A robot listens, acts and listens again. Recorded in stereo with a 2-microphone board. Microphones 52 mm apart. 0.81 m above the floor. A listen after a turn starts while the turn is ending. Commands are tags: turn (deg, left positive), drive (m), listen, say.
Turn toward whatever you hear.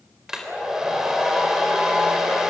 <turn deg="-30"/>
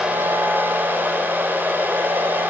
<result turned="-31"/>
<turn deg="-140"/>
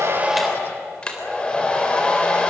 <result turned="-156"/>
<turn deg="20"/>
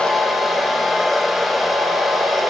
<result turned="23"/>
<say>Found it: a hair dryer, straight ahead, 2 to 4 m away.</say>